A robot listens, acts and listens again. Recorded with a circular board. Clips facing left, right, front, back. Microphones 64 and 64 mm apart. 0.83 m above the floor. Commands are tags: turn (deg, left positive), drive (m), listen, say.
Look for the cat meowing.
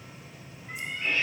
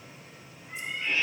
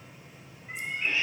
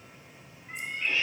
<turn deg="70"/>
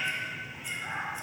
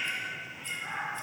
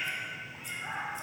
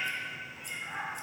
<turn deg="20"/>
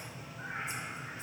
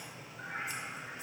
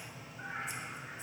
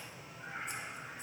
<say>Found it: a cat meowing, straight ahead, 2 to 4 m away.</say>